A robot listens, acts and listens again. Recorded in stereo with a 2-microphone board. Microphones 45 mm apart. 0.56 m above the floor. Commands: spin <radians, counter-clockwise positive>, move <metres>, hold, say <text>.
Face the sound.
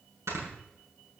spin -1.57
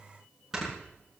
spin -0.17
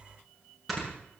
say Found it: snoring, straight ahead.